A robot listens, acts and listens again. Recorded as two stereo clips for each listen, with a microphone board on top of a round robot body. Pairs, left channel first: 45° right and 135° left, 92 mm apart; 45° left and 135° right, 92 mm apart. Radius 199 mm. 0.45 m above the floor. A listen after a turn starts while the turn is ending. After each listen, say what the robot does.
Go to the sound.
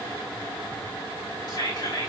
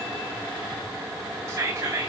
Turn 80° right.
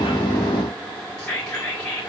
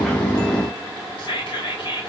Turn 35° left.
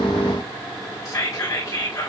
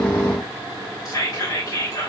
Drive 1.0 m forward.
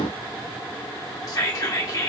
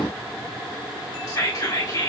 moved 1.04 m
Drive 1.0 m forward.
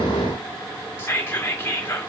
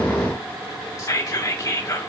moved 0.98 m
Turn 10° left.
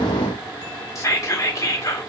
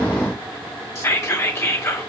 Drive 1.0 m forward.
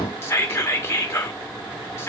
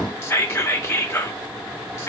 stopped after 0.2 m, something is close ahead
Arrived at the whispering, straight ahead.